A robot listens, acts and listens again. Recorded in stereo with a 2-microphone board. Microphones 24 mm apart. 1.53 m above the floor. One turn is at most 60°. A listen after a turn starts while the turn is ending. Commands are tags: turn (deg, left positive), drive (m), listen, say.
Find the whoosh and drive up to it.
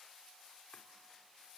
<listen/>
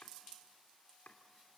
<listen/>
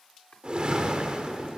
<turn deg="-45"/>
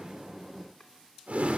<turn deg="-60"/>
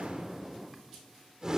<turn deg="-25"/>
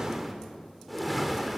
<drive m="1.0"/>
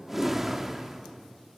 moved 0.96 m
<turn deg="-10"/>
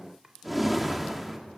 <drive m="1.0"/>
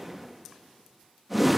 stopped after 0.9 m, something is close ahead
<say>I am next to the whoosh.</say>